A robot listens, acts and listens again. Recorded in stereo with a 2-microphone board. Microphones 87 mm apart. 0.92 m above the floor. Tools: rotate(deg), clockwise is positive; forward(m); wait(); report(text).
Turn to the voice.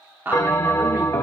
rotate(25)
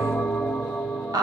rotate(130)
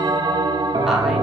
wait()
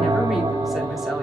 wait()
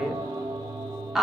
report("Facing the woman speaking.")